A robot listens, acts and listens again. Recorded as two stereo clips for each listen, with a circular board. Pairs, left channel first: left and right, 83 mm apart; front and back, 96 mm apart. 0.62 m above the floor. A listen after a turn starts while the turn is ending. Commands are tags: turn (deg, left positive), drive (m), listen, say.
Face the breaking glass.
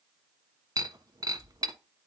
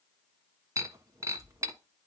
<turn deg="-125"/>
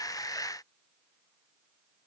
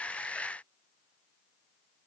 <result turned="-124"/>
<say>Facing where the breaking glass came from. I can't hear it now.</say>